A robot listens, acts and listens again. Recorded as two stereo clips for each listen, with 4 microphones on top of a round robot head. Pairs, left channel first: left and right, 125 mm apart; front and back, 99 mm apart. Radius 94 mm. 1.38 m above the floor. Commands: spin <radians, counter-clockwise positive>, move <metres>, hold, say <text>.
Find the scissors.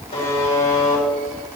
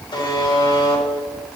hold
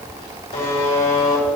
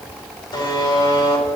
hold
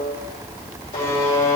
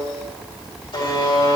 say I can't make out scissors to turn to.